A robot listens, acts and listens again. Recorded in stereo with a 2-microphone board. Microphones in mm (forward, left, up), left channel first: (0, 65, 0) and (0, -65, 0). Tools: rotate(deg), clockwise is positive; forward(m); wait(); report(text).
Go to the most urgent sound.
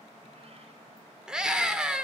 rotate(30)
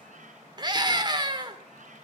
rotate(145)
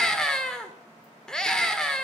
forward(1.0)
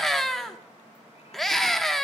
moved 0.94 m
forward(1.0)
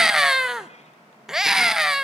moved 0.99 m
forward(1.0)
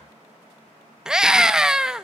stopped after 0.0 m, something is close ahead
report("I am next to the scream.")